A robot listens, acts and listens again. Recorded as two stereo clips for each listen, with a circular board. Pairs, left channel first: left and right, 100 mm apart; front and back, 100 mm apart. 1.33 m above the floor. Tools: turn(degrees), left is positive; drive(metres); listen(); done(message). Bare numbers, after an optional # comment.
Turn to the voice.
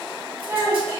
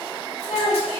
# The child speaking: 20° right.
turn(-20)
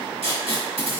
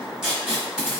listen()
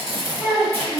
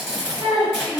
done("Facing the child speaking.")